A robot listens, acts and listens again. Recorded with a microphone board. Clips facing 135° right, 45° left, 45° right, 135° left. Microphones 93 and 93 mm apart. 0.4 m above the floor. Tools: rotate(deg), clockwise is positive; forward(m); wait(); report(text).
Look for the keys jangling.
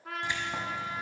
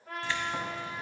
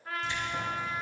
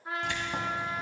rotate(-155)
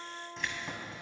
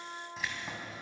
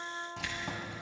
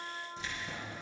rotate(40)
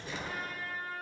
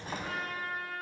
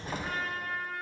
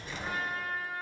report("Facing the keys jangling.")